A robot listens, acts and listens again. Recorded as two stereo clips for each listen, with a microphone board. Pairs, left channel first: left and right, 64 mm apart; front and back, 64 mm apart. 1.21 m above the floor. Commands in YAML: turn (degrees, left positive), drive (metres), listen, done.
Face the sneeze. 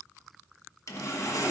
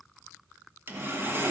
listen: true
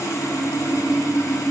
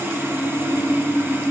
listen: true
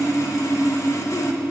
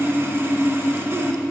done: "I can't make out a sneeze, only sawing."